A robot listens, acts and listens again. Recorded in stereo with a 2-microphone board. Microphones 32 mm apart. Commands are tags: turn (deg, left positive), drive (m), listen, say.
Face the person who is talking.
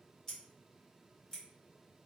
<listen/>
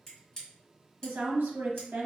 <turn deg="-70"/>
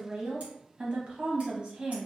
<turn deg="-40"/>
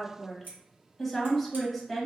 <say>Facing the woman speaking.</say>